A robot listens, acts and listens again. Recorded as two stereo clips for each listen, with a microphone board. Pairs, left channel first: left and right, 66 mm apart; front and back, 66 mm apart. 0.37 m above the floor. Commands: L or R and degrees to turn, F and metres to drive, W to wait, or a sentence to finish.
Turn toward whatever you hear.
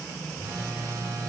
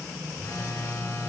R55
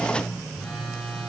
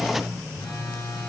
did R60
L10
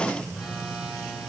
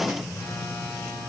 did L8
Facing the phone buzzing, 2 to 4 m away.